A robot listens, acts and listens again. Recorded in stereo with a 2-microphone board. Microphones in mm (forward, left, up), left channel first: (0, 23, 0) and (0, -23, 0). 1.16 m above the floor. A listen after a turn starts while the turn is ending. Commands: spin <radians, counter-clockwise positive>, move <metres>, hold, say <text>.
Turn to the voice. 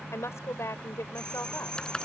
spin 1.31
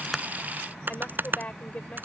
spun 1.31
spin 0.61
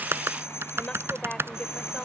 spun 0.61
spin 0.26
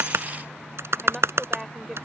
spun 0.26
say Found it: a woman speaking, straight ahead.